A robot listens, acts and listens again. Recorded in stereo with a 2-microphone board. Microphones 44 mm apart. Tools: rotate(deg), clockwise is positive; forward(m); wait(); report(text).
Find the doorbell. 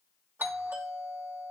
rotate(55)
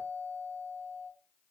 rotate(60)
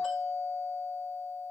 report("Found it: a doorbell, straight ahead, 2 to 4 m away.")